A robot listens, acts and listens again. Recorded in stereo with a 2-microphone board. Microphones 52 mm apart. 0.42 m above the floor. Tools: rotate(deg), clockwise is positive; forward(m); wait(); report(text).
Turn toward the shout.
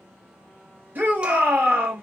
rotate(45)
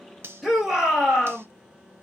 rotate(10)
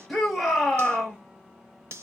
report("Found it: a shout, straight ahead, 1 to 2 m away.")